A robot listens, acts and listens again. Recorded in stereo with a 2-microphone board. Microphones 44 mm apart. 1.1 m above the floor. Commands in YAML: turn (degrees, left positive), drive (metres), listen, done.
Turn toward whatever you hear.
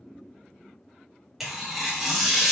turn: -30
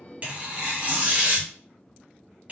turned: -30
turn: -145
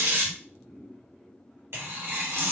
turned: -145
turn: -65
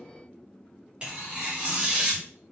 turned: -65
turn: -25
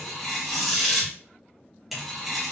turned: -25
done: "Found it: tearing paper, straight ahead, 1 to 2 m away."